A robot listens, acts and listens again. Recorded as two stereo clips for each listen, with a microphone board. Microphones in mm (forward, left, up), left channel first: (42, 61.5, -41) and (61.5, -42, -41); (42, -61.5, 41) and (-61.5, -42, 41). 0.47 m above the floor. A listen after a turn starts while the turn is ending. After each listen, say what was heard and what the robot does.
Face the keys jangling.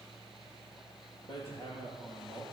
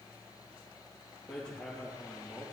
Keep listening.
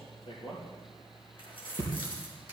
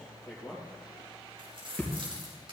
The keys jangling: 135° left. Turn 135° left.
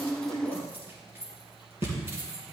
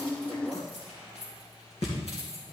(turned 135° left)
The keys jangling is now 15° right. Turn 15° right.
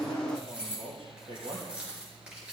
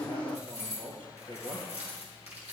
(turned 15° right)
Facing the keys jangling, over 4 m away.